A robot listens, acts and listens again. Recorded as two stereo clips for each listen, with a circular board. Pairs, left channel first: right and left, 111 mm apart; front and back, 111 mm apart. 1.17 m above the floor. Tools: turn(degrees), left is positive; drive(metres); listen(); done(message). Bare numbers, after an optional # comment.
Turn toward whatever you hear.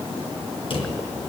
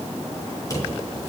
# The drawer: 60° right.
turn(-60)
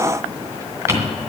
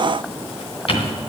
# The drawer is now 25° left.
turn(25)
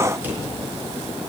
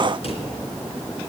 # The drawer is now 15° left.
turn(15)
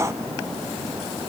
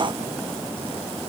listen()
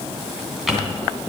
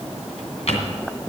done("Facing the drawer, 2 to 4 m away.")